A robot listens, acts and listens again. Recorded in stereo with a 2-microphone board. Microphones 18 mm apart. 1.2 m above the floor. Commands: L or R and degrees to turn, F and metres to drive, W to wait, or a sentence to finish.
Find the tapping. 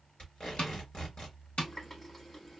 L90
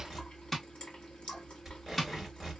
L10
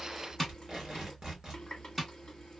Facing the tapping, 1 to 2 m away.